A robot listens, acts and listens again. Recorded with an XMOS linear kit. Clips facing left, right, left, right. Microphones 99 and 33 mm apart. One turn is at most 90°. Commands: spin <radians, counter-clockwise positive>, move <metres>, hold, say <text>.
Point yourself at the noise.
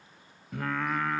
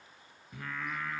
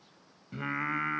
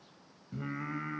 spin 1.22
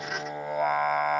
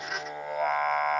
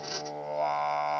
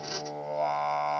say Facing the singing, under 1 m away.